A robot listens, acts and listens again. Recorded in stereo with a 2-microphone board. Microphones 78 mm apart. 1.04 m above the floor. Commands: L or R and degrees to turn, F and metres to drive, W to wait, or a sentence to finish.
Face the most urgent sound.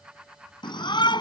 L65
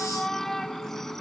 Facing the shout.